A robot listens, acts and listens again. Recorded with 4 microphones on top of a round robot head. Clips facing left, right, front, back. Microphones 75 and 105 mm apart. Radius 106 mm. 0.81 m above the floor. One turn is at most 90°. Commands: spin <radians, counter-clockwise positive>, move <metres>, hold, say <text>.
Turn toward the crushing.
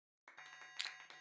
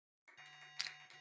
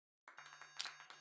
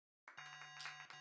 spin -0.26
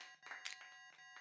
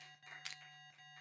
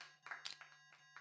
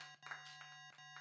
say Found it: crushing, straight ahead.